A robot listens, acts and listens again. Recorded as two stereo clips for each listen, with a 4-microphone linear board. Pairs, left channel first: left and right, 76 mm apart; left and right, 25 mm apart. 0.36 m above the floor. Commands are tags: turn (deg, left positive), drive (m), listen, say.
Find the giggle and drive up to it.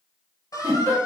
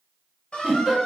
<turn deg="-50"/>
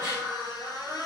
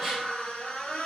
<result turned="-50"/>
<turn deg="-10"/>
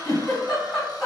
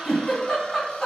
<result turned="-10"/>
<drive m="1.0"/>
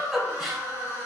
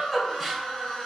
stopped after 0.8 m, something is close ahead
<say>I am next to the giggle.</say>